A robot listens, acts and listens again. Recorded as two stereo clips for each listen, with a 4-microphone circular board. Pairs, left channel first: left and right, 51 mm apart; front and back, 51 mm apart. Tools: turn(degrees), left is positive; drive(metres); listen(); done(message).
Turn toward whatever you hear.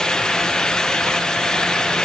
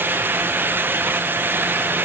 listen()
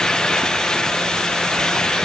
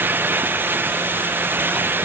listen()
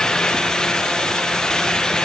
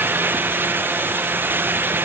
done("I can't make out anything to turn to.")